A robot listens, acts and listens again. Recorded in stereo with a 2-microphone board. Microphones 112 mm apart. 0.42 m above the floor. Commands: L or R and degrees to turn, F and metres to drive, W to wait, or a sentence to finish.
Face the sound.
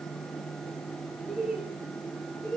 L30
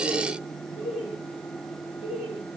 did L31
L120
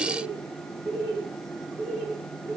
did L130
R25
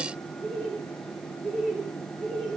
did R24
Found it: laughter, straight ahead, 2 to 4 m away.